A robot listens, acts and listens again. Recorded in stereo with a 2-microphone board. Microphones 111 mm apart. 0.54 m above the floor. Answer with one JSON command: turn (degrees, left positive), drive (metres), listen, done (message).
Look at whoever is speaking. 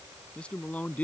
{"turn": 30}
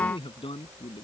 {"turn": 125}
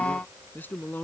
{"turn": 15}
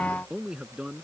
{"turn": -10}
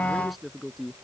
{"done": "Facing the man speaking."}